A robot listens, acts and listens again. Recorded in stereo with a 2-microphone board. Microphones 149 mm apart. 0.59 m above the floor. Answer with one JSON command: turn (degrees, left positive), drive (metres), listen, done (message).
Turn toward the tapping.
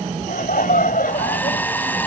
{"listen": true}
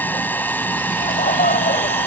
{"listen": true}
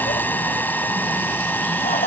{"done": "I can't make out tapping, only a hair dryer and laughter."}